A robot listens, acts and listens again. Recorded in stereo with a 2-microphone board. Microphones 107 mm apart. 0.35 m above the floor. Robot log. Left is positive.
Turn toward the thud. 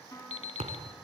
note: The thud: about 75° right or 105° right.
cmd yaw -75
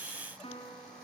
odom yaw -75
cmd idle
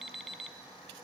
end: I heard a thud, but can't make it out now. It was about straight ahead or 30° right.